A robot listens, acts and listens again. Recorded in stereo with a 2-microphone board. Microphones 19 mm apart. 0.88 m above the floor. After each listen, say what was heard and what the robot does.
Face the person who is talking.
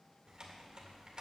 Keep listening.
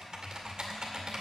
Keep listening.
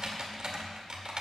I can't make out anyone speaking to turn to.